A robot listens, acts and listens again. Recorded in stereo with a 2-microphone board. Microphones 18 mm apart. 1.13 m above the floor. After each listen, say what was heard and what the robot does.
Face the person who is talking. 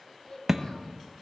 The child speaking: about 50° left or 130° left. Turn 50° left.
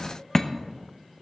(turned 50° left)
Keep listening.
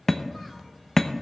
Keep listening.
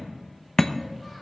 I heard a child speaking, but can't make it out now. It was about straight ahead or 80° left.